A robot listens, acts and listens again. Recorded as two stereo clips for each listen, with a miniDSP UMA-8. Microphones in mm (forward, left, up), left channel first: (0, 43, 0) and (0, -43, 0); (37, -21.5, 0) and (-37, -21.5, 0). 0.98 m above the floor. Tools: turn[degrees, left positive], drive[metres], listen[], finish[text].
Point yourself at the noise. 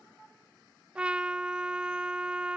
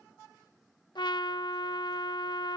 Thought: The trumpet: 15° right.
Action: turn[-15]
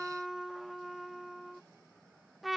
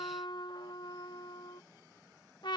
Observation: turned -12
Action: finish[Facing the trumpet.]